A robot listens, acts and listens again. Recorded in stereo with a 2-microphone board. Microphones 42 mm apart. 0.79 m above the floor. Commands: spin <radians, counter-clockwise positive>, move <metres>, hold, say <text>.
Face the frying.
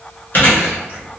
hold
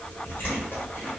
hold
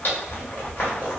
say I can't make out frying, only chewing.